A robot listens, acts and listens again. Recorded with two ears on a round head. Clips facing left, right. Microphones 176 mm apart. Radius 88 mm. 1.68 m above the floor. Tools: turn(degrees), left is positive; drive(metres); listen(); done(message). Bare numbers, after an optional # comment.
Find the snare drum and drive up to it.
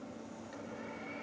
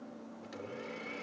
listen()
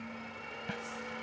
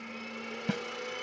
# The snare drum: about 60° right or 120° right.
turn(-60)
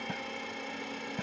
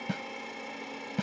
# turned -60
# So it is at 55° right.
turn(-55)
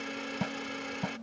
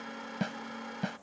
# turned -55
# The snare drum is now 15° right.
turn(-15)
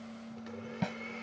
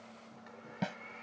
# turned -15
drive(1.0)
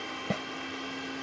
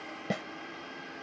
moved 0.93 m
drive(1.0)
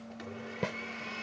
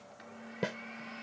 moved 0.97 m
# The snare drum is now 10° right.
turn(-10)
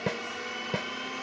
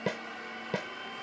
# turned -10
drive(1.0)
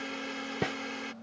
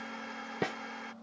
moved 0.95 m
drive(1.0)
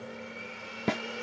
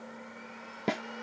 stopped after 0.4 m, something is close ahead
done("I am next to the snare drum.")